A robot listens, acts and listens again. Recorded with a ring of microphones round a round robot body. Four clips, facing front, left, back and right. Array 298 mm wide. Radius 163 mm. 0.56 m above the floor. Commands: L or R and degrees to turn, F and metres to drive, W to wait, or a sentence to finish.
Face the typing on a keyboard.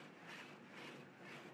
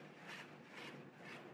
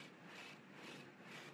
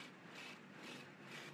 W
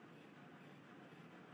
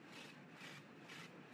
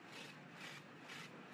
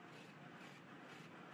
W
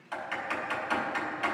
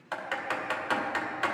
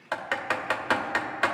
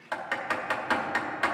L180
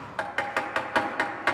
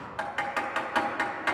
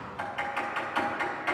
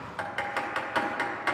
Found it: typing on a keyboard, straight ahead.